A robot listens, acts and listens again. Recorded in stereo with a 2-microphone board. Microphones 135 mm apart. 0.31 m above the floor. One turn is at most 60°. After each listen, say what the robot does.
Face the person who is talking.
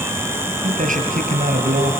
Turn 60° right.
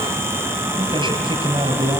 Turn 40° right.
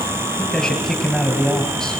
Facing the man speaking.